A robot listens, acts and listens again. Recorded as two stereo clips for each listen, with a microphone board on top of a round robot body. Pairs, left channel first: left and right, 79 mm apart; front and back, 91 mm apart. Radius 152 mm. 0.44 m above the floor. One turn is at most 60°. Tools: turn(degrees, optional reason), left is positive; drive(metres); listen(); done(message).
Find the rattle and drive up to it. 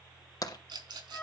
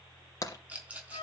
turn(degrees=-60, reason="The rattle: 105° right.")
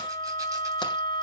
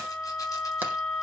turn(degrees=-45, reason="Nothing new. It was at 45° right.")
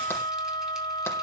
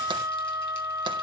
listen()
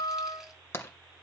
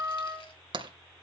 done("Facing where the rattle came from. I can't hear it now. I did not reach it.")